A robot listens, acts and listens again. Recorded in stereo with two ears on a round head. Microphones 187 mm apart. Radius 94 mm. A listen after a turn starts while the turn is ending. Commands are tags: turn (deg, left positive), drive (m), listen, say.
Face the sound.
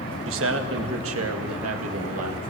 <turn deg="-90"/>
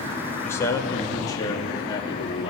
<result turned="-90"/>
<turn deg="25"/>
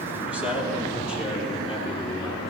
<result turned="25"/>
<say>Found it: a man speaking, straight ahead.</say>